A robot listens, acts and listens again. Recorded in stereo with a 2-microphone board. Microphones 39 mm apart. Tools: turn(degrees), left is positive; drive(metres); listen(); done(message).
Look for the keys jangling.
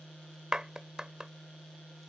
listen()
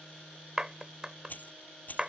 turn(degrees=45)
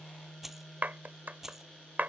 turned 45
turn(degrees=-10)
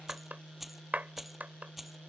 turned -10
done("Facing the keys jangling.")